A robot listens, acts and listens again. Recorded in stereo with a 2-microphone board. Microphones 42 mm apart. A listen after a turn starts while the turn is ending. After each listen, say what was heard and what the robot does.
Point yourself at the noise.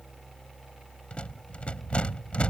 The rattle: about 30° left or 150° left. Turn 30° left.
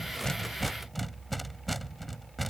Facing the rattle.